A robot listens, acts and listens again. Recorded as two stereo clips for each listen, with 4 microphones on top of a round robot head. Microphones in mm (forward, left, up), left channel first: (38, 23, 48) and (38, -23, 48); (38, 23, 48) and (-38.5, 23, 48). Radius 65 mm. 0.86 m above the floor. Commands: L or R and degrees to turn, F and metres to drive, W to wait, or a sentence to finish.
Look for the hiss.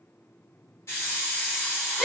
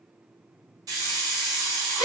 L145
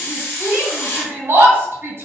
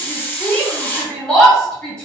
L60
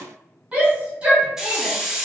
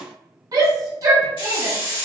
R15
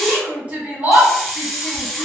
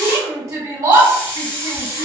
Found it: a hiss, straight ahead.